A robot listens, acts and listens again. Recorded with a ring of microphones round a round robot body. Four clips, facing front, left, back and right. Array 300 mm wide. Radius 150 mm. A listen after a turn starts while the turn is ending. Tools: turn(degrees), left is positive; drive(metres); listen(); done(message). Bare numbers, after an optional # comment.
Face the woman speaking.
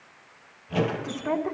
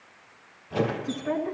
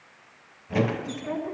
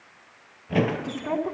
# The woman speaking: 35° right.
turn(-35)
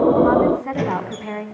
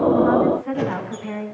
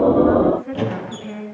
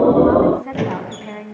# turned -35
# The woman speaking is now 10° right.
turn(-10)
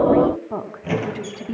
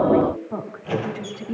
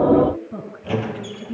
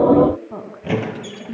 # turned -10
done("Found it: a woman speaking, straight ahead.")